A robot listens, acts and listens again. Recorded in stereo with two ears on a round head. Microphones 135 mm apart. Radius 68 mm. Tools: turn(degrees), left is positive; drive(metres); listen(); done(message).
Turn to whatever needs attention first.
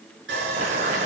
listen()
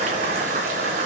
listen()
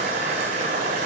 done("I can't make out anything urgent, only boiling and sawing.")